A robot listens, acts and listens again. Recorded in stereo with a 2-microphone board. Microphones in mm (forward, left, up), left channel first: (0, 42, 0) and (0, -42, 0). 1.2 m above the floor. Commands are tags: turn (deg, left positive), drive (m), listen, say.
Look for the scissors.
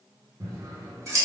<turn deg="-40"/>
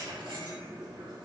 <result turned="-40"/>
<turn deg="-95"/>
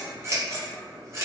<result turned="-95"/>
<turn deg="-40"/>
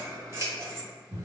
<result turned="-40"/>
<turn deg="-35"/>
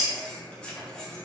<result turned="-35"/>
<turn deg="15"/>
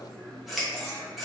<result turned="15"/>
<say>Facing the scissors.</say>